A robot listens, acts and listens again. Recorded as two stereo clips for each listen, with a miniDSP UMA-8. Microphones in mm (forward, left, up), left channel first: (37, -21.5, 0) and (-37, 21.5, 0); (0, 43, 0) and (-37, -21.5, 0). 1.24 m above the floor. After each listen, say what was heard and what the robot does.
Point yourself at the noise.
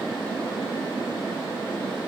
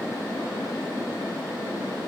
Keep listening.
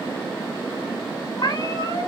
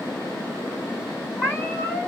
The cat meowing: 10° left. Turn 10° left.
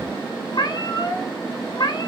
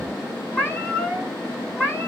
Facing the cat meowing, 2 to 4 m away.